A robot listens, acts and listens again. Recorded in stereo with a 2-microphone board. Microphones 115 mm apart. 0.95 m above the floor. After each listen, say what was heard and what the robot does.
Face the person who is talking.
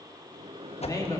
The man speaking: about 30° left or 150° left. Turn 30° left.
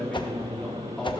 Found it: a man speaking, straight ahead.